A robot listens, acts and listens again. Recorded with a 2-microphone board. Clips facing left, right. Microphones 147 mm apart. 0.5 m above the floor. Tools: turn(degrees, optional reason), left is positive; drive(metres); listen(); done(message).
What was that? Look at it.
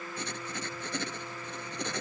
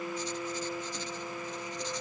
turn(degrees=65, reason="The writing: about 65° left or 115° left.")
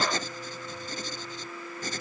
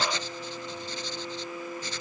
turn(degrees=45, reason="So it is at 45° left.")
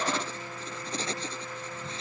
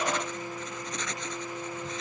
turn(degrees=30, reason="The writing is now 30° left.")
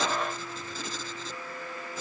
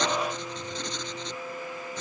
done("Found it: writing, straight ahead.")